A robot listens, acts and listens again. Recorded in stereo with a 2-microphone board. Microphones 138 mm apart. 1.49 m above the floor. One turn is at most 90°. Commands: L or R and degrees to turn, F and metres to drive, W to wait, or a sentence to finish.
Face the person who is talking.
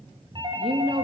R45
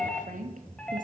R90
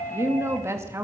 R20
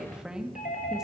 Found it: a woman speaking, straight ahead, 2 to 4 m away.